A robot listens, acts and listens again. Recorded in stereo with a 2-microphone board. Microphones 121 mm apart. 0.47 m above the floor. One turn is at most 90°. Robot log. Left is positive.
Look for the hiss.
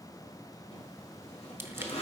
cmd idle
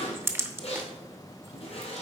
cmd idle
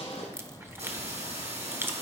note: The hiss: about 65° right or 115° right.
cmd yaw -65
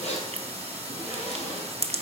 note: So it is at 55° right.
cmd yaw -55
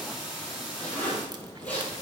end: Facing the hiss.